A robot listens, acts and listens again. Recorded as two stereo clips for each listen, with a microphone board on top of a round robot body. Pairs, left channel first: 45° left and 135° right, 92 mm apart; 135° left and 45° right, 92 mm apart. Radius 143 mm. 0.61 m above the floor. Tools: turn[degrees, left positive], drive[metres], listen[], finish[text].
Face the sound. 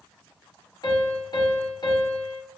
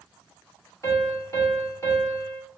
Thought: The piano: 80° left.
Action: turn[80]
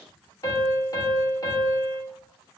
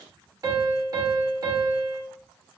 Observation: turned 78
Action: finish[Facing the piano.]